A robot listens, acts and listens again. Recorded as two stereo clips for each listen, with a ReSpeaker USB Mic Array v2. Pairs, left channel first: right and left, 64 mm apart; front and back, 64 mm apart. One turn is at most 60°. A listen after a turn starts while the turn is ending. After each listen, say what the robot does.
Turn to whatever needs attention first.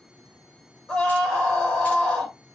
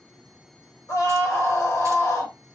Turn 15° right.
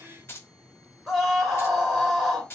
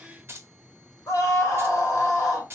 Facing the scream.